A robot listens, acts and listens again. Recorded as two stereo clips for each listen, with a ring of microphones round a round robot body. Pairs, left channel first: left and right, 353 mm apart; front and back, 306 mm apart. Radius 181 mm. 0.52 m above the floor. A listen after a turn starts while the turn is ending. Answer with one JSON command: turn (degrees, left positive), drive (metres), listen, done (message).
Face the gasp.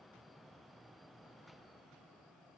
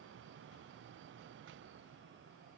{"listen": true}
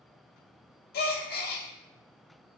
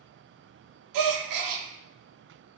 {"turn": 155}
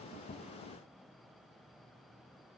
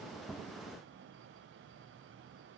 {"done": "Facing where the gasp came from. I can't hear it now."}